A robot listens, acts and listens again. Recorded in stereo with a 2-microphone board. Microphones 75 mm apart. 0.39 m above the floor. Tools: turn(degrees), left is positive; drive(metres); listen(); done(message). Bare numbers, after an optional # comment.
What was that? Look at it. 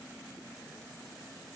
listen()
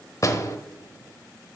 # The door slam: about 45° left or 135° left.
turn(45)
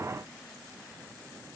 listen()
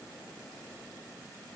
done("I heard a door slam, but can't make it out now. It was about straight ahead or 90° left.")